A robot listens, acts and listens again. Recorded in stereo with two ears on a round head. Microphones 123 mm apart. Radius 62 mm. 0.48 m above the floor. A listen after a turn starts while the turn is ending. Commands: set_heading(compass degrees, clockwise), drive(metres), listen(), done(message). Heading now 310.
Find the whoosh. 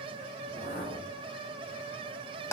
set_heading(265)
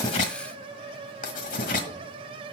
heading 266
listen()
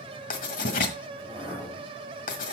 done("Facing the whoosh.")